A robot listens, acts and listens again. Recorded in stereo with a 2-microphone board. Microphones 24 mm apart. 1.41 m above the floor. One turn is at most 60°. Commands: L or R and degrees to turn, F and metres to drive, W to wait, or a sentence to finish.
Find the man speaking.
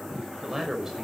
R20
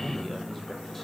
W
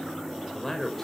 L10
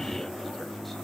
W
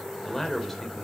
L15
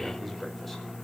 W
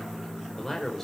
L15
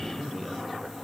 W
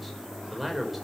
Found it: a man speaking, straight ahead, over 4 m away.